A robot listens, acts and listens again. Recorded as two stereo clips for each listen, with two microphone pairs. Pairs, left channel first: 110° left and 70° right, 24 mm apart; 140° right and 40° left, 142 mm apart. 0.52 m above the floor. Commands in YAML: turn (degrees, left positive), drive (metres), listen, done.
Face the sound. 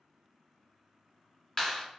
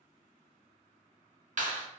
turn: 55
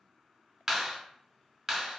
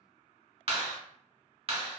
turn: 10
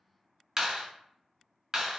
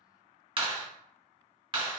done: "Found it: a clap, straight ahead."